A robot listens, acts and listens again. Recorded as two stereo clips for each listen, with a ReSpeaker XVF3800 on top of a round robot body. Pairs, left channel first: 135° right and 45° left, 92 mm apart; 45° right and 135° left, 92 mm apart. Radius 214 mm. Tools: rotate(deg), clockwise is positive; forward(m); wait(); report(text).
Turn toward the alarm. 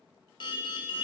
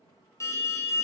rotate(100)
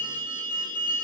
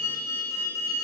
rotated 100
rotate(-15)
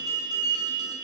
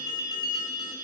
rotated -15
report("Found it: an alarm, straight ahead.")